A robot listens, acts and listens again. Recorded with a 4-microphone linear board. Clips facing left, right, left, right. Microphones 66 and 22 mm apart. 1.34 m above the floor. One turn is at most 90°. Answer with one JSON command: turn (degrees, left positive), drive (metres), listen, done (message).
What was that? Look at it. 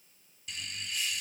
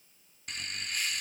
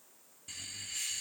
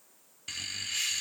{"turn": -55}
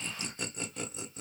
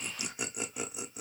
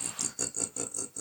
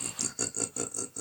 {"turn": -15}
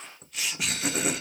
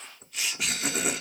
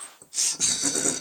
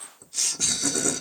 {"done": "Facing the laughter, under 1 m away."}